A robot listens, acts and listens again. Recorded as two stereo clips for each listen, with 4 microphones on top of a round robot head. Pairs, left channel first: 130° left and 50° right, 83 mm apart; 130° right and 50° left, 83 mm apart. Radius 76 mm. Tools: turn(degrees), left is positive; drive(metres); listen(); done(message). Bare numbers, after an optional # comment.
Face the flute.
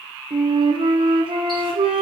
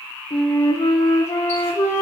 # The flute: 75° right.
turn(-75)
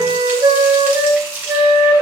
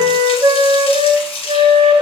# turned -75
done("Facing the flute.")